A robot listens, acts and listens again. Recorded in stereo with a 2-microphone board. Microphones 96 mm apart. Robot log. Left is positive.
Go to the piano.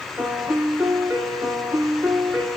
note: The piano: about 20° right or 160° right.
cmd yaw -20
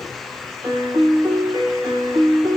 note: So it is at 140° right.
cmd yaw -140
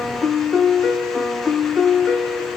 note: The piano is now 10° right.
cmd yaw -10
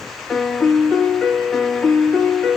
cmd fwd 1.0
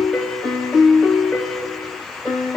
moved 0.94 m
cmd fwd 1.0
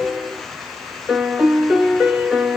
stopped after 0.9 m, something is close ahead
note: The piano is now 10° right.
cmd yaw -10
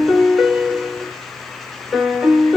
end: I am next to the piano.